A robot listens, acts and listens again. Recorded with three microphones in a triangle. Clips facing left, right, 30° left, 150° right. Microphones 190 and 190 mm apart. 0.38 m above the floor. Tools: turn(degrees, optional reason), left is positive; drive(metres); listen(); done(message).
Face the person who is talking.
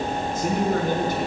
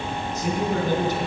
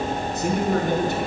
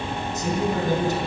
turn(degrees=55, reason="The man speaking: 55° left.")
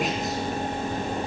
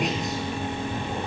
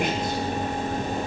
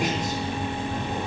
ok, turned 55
listen()
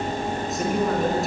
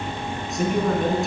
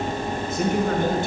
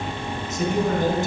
done("Found it: a man speaking, straight ahead, over 4 m away.")